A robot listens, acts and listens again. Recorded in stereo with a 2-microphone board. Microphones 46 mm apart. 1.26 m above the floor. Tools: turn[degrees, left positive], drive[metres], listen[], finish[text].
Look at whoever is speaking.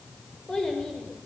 Thought: The child speaking: about 15° left or 165° left.
Action: turn[15]
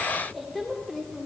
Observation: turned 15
Action: turn[30]
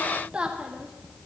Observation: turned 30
Thought: So it is at 15° right.
Action: turn[-15]
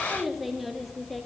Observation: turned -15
Action: finish[Facing the child speaking, 1 to 2 m away.]